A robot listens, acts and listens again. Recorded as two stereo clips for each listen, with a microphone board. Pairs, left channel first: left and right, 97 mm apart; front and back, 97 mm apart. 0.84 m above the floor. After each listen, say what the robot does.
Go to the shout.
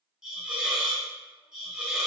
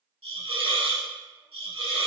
Keep listening.
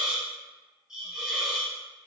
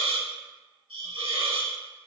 Keep listening.
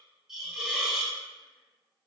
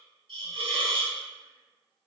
I can't make out a shout, only a hiss.